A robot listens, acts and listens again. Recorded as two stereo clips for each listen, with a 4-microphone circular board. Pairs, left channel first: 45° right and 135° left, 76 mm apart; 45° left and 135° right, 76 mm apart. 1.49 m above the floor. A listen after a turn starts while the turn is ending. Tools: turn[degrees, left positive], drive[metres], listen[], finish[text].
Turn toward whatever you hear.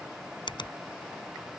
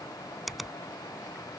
Thought: The finger snap: 45° right.
Action: turn[-45]
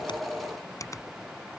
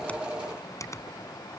Action: finish[Found it: a finger snap, straight ahead.]